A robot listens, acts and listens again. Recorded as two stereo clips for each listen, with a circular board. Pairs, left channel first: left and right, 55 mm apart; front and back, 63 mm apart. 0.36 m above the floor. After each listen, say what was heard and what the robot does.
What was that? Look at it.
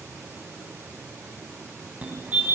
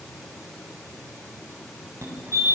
The fire alarm: 150° right. Turn 150° right.
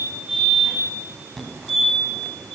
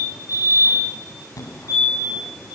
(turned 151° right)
Facing the fire alarm.